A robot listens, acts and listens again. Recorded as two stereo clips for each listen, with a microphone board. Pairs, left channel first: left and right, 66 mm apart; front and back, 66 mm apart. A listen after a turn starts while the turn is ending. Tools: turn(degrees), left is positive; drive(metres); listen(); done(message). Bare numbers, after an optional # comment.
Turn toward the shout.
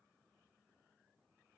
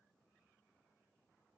listen()
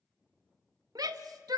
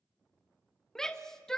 # The shout: 80° right.
turn(-80)
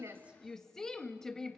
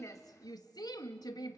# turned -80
# The shout is now 10° left.
turn(10)
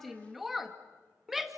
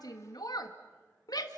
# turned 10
done("Facing the shout.")